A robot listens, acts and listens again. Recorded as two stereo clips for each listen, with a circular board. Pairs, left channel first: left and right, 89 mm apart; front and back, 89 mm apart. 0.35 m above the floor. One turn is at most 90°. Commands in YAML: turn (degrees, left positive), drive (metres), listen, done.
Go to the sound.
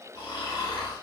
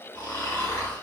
turn: 60
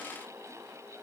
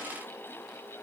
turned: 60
listen: true
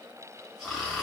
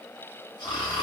drive: 1.0
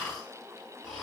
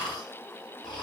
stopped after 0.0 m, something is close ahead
done: "Something is in my way. I am facing the snoring but have not reached it."